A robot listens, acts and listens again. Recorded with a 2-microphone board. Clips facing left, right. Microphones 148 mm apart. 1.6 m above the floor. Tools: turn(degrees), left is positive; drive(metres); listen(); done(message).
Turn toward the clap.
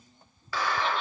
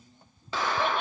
turn(degrees=-20)
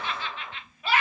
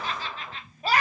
done("Facing the clap, 1 to 2 m away.")